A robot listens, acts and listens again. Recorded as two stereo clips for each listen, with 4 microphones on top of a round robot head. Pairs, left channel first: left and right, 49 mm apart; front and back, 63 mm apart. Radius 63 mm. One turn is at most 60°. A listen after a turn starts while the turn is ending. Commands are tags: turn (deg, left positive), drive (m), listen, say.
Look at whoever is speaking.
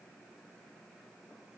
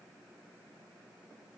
<listen/>
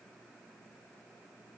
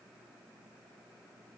<listen/>
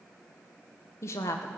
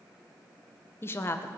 <turn deg="50"/>
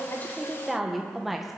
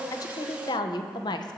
<say>Facing the woman speaking, 1 to 2 m away.</say>